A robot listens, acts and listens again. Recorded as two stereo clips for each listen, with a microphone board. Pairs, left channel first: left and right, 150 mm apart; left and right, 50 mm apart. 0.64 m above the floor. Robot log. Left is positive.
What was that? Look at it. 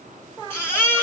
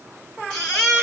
note: The baby crying: about 15° left or 165° left.
cmd yaw +15
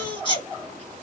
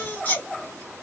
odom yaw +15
note: So it is at 150° left.
cmd yaw +150
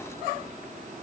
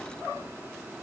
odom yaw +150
cmd idle
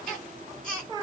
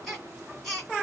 end: Facing the baby crying, 2 to 4 m away.